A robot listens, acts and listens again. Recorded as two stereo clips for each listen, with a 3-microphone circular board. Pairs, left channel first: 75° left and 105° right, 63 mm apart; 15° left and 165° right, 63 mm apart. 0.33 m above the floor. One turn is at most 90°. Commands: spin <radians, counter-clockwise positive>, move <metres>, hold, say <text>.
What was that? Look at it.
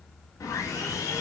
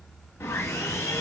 spin 0.96
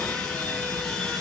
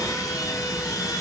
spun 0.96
say Facing the sawing, 1 to 2 m away.